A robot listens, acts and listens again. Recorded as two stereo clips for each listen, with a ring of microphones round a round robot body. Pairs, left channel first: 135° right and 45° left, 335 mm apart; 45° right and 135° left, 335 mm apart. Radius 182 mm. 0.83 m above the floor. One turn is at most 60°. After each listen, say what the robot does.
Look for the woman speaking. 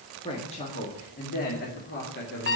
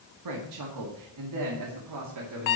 Turn 60° left.
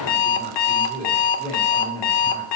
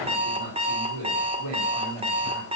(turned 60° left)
Turn 60° left.
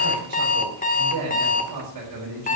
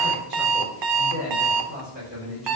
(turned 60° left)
Turn 60° left.
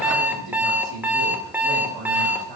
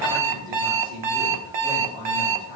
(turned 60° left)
Turn 40° left.
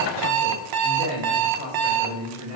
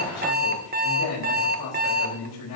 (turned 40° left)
Turn 20° right.
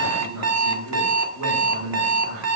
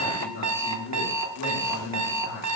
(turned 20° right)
Found it: a woman speaking, straight ahead, over 4 m away.